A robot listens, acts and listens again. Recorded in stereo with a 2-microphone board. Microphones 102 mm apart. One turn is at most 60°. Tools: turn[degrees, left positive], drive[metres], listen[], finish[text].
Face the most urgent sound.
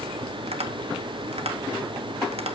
Action: listen[]
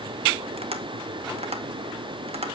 Action: listen[]
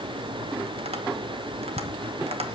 Action: finish[I can't make out anything urgent to turn to.]